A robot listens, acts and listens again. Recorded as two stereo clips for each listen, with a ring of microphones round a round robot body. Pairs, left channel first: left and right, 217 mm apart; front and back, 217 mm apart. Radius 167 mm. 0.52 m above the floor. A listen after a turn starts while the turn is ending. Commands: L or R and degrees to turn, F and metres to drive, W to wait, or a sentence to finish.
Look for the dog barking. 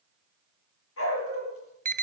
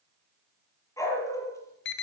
L75
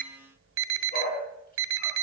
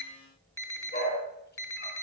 L40
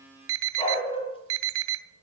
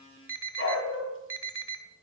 L25
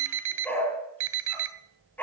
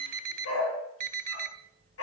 L10
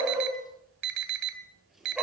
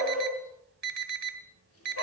Facing the dog barking.